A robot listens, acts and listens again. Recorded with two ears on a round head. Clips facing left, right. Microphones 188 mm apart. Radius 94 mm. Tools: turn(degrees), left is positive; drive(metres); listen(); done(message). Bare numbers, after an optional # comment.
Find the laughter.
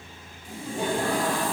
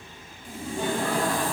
turn(30)
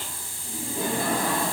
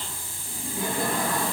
# So it is at 125° left.
turn(125)
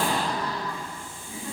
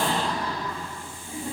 # The laughter is now 10° right.
turn(-10)
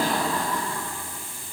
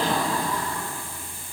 done("Found it: laughter, straight ahead, over 4 m away.")